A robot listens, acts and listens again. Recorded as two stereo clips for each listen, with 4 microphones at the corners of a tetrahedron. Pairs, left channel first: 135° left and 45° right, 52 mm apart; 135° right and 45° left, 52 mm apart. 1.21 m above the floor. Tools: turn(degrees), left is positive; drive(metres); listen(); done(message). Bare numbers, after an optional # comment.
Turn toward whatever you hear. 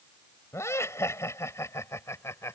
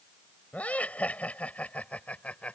# The laughter: 160° left.
turn(160)
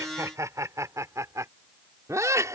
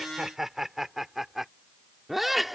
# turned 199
# The laughter is now 45° right.
turn(-45)
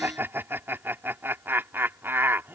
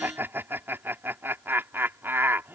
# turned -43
done("Facing the laughter.")